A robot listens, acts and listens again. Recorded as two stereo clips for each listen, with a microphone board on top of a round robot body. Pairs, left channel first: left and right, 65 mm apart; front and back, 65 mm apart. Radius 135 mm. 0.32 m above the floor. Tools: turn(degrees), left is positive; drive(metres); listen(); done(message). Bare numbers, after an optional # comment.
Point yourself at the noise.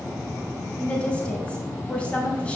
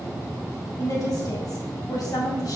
# The woman speaking: 20° left.
turn(20)
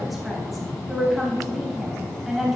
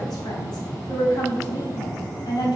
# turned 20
done("Facing the woman speaking.")